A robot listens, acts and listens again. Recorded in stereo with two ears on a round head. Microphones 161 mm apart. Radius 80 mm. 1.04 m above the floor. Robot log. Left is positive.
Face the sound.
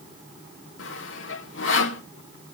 note: The sawing: about 70° left or 110° left.
cmd yaw +70
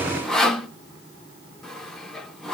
end: Found it: sawing, straight ahead.